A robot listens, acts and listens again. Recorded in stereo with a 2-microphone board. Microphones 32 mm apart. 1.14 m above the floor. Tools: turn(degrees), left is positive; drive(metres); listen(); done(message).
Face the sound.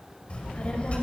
turn(degrees=40)
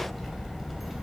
done("Facing the child speaking, over 4 m away.")